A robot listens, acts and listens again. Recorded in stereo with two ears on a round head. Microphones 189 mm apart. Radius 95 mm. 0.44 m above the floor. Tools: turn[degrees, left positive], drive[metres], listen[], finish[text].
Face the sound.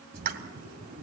Thought: The pop: about 45° right or 135° right.
Action: turn[-45]
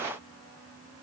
Action: listen[]
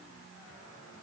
Action: finish[I heard a pop, but can't make it out now. It was about straight ahead or 90° right.]